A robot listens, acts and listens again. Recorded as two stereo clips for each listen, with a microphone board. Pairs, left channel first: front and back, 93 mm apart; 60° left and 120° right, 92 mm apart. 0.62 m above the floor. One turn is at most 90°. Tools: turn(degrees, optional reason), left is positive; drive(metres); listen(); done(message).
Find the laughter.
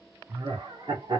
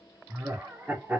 turn(degrees=90, reason="The laughter: 170° left.")
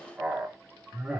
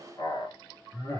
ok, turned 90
turn(degrees=90, reason="The laughter is now 95° left.")
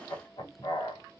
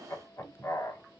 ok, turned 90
done("Facing the laughter.")